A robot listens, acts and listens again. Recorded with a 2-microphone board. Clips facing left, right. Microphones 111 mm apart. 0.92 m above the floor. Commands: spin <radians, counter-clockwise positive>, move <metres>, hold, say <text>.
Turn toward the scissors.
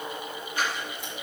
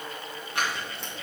spin -1.57
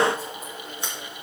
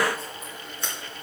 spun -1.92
spin 0.35
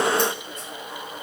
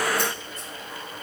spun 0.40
hold
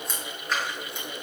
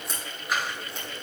say Found it: scissors, straight ahead, 2 to 4 m away.